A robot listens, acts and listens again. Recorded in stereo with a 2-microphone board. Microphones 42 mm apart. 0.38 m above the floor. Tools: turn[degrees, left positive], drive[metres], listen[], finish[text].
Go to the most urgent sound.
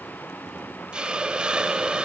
Action: listen[]
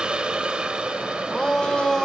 Action: turn[30]
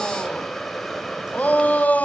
Thought: So it is at 135° left.
Action: turn[135]
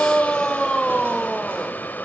Thought: The shout is now 20° left.
Action: turn[20]
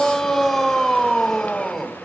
Action: drive[1.0]
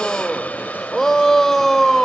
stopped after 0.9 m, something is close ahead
Thought: The shout is now 10° left.
Action: turn[10]
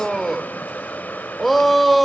Action: finish[Arrived at the shout, straight ahead.]